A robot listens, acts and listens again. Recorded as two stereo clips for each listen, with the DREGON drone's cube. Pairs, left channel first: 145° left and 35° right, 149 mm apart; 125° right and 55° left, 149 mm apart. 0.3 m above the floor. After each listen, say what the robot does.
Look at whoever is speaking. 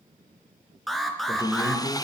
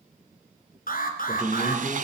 Turn 175° right.
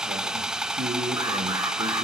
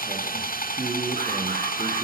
Turn 20° right.
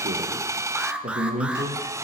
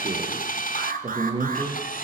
Facing the man speaking.